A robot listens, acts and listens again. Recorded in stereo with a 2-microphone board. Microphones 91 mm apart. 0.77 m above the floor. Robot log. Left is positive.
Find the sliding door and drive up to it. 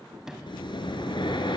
cmd yaw -30
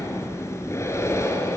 cmd idle
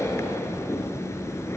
cmd idle
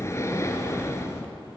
end: I heard a sliding door, but can't make it out now. It was about 25° left or 145° right. I did not reach it.